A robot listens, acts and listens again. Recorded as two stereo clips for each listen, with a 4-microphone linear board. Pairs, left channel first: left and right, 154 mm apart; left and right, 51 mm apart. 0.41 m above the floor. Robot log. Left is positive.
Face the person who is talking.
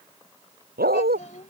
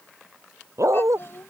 note: The child speaking: about 50° left or 130° left.
cmd yaw +50
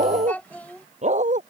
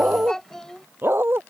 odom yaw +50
note: So it is at 10° left.
cmd yaw +10
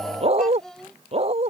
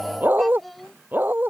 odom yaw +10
end: Found it: a child speaking, straight ahead.